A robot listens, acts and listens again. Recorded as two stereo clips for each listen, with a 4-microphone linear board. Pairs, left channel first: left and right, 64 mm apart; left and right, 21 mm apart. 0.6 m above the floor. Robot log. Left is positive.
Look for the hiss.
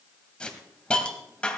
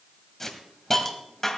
cmd yaw +30
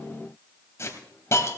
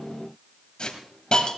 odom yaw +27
note: So it is at 140° left.
cmd yaw +140
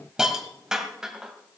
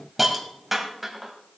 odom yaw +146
note: The hiss is now 10° right.
cmd yaw -10
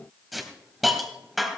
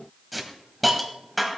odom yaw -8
end: Facing the hiss, 1 to 2 m away.